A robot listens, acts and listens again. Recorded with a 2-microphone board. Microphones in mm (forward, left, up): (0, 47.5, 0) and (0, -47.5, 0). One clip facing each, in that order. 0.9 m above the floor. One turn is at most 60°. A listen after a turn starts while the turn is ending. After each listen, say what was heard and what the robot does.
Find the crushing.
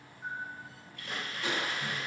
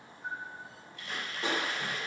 The crushing: about 35° right or 145° right. Turn 35° right.
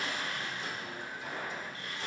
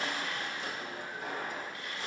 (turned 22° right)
So it is at 120° right. Turn 60° right.
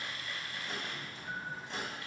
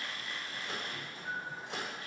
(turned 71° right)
Nothing new. It was at 50° right. Turn 50° right.
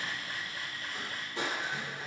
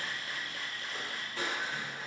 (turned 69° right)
The crushing is now 20° left. Turn 20° left.
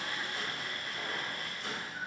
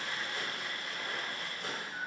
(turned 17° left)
Keep listening.
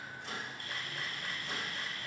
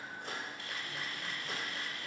Keep listening.
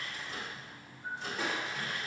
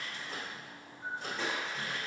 Facing the crushing.